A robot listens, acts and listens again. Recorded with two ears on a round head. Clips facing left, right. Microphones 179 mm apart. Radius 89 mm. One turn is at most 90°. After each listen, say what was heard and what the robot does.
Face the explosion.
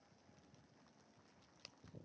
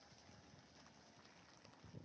Keep listening.
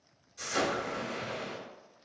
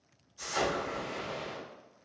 The explosion: about 70° left or 110° left. Turn 70° left.
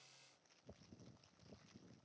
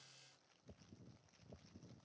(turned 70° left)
Keep listening.
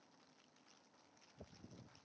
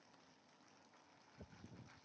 I heard an explosion, but can't make it out now. It was about straight ahead or 40° left.